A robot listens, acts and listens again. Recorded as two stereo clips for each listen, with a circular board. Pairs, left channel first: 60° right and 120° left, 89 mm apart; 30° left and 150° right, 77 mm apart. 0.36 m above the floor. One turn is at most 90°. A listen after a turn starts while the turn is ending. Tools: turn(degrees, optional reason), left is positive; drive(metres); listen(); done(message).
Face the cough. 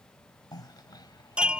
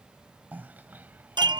turn(degrees=-90, reason="The cough: 90° right.")
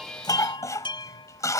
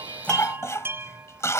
turn(degrees=-15, reason="The cough is now 15° right.")
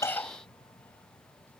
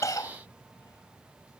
done("Found it: a cough, straight ahead.")